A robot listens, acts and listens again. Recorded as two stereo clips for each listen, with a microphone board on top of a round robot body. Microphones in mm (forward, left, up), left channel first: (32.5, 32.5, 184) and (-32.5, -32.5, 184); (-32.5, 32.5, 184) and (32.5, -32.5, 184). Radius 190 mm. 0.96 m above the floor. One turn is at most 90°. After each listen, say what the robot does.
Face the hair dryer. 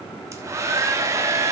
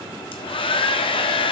Turn 90° left.
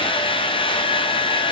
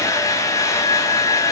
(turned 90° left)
Turn 75° left.
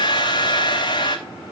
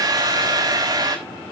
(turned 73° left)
Found it: a hair dryer, straight ahead.